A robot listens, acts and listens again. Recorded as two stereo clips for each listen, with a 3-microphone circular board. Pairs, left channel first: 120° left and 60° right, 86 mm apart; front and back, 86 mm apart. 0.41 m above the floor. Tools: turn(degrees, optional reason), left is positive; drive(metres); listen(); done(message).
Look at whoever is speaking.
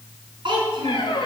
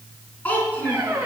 turn(degrees=-70, reason="The child speaking: 70° right.")
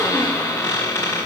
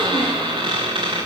listen()
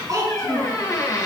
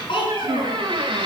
turn(degrees=-10, reason="The child speaking is now 10° right.")
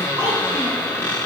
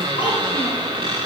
listen()
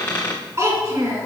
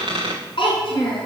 done("Found it: a child speaking, straight ahead, 2 to 4 m away.")